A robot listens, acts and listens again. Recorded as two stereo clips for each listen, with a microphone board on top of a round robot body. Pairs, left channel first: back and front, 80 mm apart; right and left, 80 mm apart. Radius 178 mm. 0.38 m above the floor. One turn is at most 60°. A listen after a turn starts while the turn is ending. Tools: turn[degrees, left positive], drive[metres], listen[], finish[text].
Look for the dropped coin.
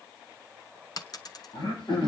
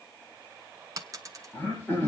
Thought: The dropped coin: 140° left.
Action: turn[60]
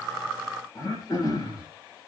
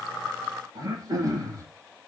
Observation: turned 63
Thought: Nothing new. It was at 75° left.
Action: turn[60]
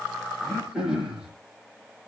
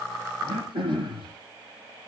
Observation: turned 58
Thought: Nothing new. It was at 20° left.
Action: turn[20]
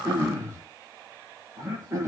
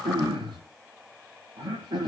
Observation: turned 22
Action: finish[Facing where the dropped coin came from. I can't hear it now.]